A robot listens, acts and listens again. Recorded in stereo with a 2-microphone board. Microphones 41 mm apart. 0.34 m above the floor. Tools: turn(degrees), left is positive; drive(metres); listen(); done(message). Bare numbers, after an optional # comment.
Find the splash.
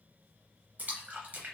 # The splash: about 40° right or 140° right.
turn(-40)
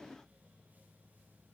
listen()
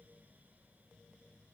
done("I heard a splash, but can't make it out now. It was about straight ahead or 100° right.")